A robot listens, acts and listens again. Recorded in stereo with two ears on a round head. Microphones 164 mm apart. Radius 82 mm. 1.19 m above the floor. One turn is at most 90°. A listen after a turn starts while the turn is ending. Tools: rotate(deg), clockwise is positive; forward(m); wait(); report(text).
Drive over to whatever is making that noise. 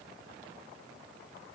wait()
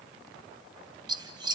rotate(25)
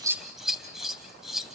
forward(1.0)
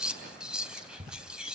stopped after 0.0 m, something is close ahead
report("Something is in my way. I am facing the scissors but have not reached it.")